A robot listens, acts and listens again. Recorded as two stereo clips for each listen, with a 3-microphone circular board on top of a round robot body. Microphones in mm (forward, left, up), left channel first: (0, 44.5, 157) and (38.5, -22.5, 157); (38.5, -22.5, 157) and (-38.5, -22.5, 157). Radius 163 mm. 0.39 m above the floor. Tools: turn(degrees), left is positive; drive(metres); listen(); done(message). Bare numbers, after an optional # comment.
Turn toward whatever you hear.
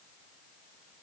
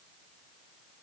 listen()
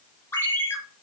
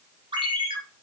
# The ringtone: straight behind.
turn(180)
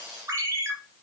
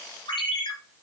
done("Found it: a ringtone, straight ahead.")